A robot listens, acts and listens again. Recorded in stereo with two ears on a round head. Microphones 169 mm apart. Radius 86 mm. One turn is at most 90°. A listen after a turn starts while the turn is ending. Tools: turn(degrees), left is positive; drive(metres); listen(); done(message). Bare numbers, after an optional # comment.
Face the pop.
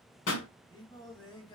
# The pop: about 65° left or 115° left.
turn(65)
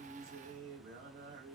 listen()
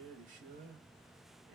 done("I heard a pop, but can't make it out now. It was about straight ahead or 50° left.")